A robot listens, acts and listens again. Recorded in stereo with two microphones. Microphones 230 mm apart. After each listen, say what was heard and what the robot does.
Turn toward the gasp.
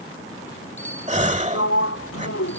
The gasp: about 30° right or 150° right. Turn 30° right.
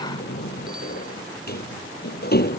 Keep listening.
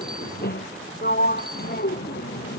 I heard a gasp, but can't make it out now. It was about straight ahead or 120° right.